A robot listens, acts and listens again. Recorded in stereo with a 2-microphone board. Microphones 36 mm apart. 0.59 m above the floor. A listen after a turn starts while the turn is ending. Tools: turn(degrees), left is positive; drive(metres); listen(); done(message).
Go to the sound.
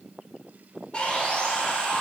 turn(degrees=35)
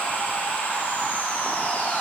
turn(degrees=100)
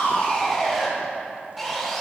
drive(metres=1.0)
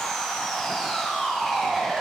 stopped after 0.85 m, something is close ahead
done("I am next to the sawing.")